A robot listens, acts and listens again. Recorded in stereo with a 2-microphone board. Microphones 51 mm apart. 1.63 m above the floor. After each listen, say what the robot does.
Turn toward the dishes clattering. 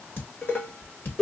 Turn 40° left.
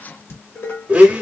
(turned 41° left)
Turn 90° left.
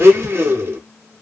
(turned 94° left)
Keep listening.
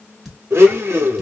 Facing the dishes clattering.